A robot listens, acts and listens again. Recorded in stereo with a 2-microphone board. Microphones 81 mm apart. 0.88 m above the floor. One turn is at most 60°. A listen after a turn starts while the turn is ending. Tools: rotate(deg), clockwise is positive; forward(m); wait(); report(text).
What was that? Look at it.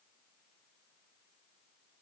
wait()
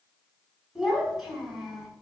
rotate(30)
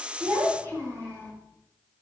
rotate(60)
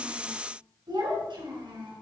rotate(60)
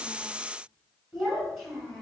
report("Facing the child speaking, over 4 m away.")